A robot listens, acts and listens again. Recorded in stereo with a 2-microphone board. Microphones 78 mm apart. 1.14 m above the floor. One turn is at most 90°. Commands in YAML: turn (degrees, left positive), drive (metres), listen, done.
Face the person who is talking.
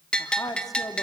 turn: 50
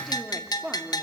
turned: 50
turn: -10
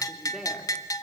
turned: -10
done: "Found it: a woman speaking, straight ahead, 2 to 4 m away."